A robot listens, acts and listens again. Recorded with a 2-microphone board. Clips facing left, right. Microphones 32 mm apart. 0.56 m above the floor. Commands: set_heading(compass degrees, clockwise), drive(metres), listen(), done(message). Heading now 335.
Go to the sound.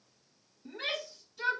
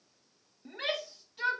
set_heading(10)
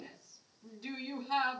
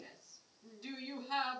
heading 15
drive(1.0)
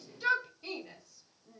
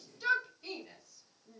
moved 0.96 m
set_heading(5)
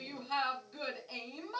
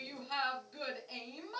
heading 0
drive(1.0)
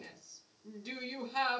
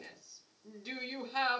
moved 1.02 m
set_heading(10)
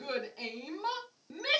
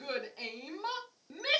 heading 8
drive(1.0)
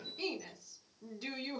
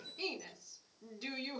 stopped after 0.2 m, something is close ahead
done("Arrived at the shout, straight ahead.")